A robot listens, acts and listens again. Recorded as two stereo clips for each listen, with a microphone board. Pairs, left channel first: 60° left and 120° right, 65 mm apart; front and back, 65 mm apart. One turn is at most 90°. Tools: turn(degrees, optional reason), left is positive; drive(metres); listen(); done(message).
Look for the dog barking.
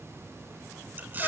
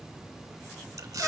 listen()
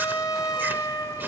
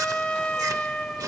listen()
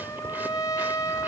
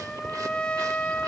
done("I can't make out a dog barking to turn to.")